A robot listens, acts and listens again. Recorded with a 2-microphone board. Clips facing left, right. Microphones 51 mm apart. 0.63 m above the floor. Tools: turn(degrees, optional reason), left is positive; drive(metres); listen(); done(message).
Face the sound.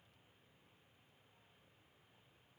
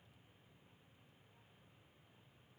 listen()
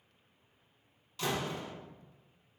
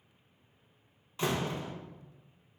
turn(degrees=-30, reason="The door slam: about 30° right or 150° right.")
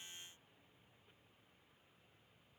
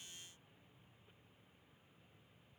listen()
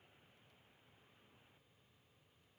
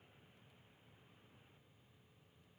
done("I heard a door slam, but can't make it out now. It was about straight ahead or 120° right.")